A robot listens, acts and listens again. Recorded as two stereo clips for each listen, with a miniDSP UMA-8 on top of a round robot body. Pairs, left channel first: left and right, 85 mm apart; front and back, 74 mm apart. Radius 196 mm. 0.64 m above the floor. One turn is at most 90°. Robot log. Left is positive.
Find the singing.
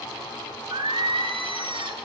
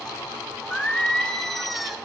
note: The singing: 90° right.
cmd yaw -90
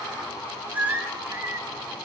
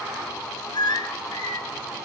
note: The singing is now 30° right.
cmd yaw -30
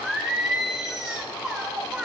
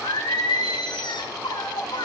note: The singing is now 10° right.
cmd yaw -10
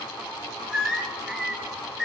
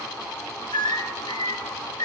end: Found it: singing, straight ahead, 2 to 4 m away.